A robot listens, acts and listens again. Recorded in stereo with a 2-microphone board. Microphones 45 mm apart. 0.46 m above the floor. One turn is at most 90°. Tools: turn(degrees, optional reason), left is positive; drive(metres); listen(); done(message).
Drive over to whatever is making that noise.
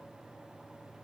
listen()
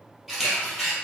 turn(degrees=-30)
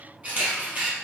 turn(degrees=-90, reason="So it is at 140° right.")
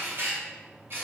turn(degrees=-60, reason="The camera shutter is now 60° right.")
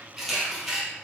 drive(metres=1.0)
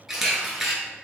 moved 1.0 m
drive(metres=1.0)
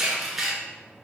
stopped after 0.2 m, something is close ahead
done("Arrived at the camera shutter, straight ahead.")